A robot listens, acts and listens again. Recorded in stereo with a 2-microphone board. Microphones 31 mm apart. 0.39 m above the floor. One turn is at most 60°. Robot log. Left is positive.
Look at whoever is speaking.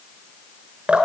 cmd idle
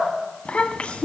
note: The child speaking: about 35° left or 145° left.
cmd yaw +35
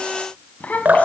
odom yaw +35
note: So it is at 105° left.
cmd yaw +60
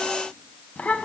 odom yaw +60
note: The child speaking is now 65° left.
cmd yaw +60
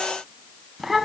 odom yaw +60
end: Facing the child speaking.